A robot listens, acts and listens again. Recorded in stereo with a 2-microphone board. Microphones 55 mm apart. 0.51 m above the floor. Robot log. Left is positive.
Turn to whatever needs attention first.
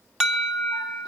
cmd yaw -30
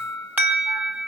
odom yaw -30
note: So it is at 140° right.
cmd yaw -140
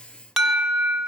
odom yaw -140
end: Facing the alarm, 2 to 4 m away.